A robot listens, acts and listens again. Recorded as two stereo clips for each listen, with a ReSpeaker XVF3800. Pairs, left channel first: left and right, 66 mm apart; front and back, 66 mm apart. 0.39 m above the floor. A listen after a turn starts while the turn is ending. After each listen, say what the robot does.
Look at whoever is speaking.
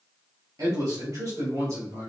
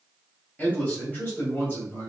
Turn 50° right.
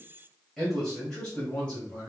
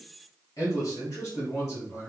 Turn 25° left.
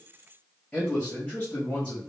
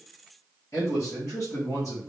Turn 30° left.
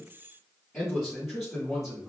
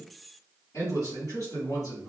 Facing the man speaking, 2 to 4 m away.